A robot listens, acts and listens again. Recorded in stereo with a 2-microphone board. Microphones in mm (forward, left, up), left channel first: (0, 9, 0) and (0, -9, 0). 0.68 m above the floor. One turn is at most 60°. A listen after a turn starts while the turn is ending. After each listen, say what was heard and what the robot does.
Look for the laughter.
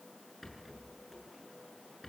Keep listening.
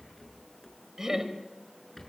The laughter: about 25° right or 155° right. Turn 25° right.
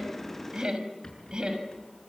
So it is at 130° right. Turn 60° right.
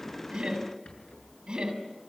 The laughter is now 55° right. Turn 55° right.
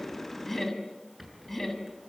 The laughter is now 10° left. Turn 10° left.
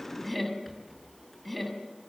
Facing the laughter.